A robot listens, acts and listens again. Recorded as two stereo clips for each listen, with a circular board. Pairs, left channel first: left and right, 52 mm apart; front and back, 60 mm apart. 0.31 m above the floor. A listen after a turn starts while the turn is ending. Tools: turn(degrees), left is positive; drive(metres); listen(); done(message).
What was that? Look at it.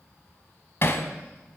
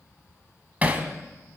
turn(degrees=120)
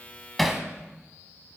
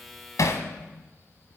done("Facing the hammering, 1 to 2 m away.")